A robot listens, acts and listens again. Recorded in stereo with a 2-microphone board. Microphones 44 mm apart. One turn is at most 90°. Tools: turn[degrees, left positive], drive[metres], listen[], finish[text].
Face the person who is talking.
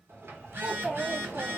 Thought: The child speaking: about 15° right or 165° right.
Action: turn[-15]
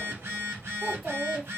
Action: finish[Facing the child speaking, 1 to 2 m away.]